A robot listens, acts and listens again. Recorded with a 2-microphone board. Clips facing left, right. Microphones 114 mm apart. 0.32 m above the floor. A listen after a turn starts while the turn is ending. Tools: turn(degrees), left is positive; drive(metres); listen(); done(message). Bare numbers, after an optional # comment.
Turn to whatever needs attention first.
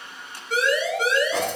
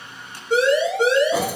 # The siren: about 25° right or 155° right.
turn(-25)
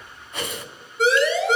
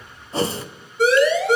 done("Found it: a siren, straight ahead.")